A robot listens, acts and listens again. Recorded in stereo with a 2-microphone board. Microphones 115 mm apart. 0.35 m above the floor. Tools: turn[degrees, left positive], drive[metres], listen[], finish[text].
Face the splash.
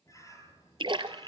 Thought: The splash: about 50° right or 130° right.
Action: turn[-50]
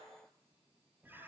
Action: listen[]
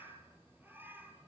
Action: finish[I heard a splash, but can't make it out now. It was about straight ahead or 80° right.]